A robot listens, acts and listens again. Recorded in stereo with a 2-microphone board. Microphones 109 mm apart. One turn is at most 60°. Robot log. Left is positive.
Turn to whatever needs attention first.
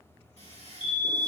note: The fire alarm: about 45° left or 135° left.
cmd yaw +45
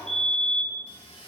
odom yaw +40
end: Found it: a fire alarm, straight ahead.